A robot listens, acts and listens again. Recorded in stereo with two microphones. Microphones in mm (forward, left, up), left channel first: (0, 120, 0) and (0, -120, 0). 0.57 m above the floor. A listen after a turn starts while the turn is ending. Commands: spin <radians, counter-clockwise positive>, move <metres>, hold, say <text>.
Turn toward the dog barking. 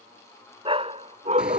spin -0.52
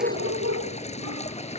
spin -1.92
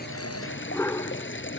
spin 0.26
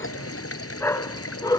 spin 0.26
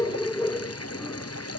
spin 0.17
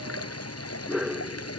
say Found it: a dog barking, straight ahead.